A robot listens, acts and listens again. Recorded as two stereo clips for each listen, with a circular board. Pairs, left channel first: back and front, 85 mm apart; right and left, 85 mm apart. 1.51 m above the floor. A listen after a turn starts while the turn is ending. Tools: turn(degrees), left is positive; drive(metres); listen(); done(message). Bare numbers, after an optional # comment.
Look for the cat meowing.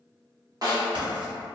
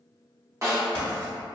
listen()
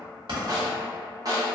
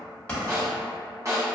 listen()
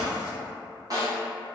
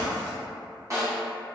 done("I can't make out a cat meowing to turn to.")